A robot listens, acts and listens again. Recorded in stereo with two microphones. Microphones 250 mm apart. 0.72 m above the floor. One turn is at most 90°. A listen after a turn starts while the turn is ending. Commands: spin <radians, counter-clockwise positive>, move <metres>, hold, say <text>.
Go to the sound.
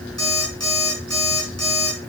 spin -1.57
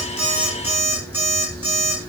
spin -0.17
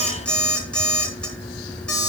move 1.0
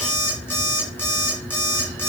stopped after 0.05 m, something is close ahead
spin 0.17
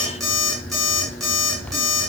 say Something is in my way. I am facing the alarm clock but have not reached it.